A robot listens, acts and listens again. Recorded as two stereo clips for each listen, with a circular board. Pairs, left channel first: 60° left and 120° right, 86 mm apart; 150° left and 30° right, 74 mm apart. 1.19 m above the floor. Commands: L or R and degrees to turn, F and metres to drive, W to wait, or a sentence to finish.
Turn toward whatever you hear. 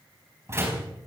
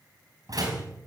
R60
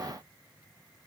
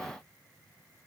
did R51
R10
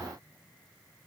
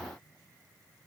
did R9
Facing where the door slam came from. I can't hear it now.